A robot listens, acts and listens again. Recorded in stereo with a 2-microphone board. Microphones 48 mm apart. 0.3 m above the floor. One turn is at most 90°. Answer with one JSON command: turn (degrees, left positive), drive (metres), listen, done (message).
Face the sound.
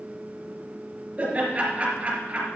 {"turn": -30}
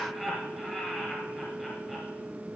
{"done": "Facing the laughter, over 4 m away."}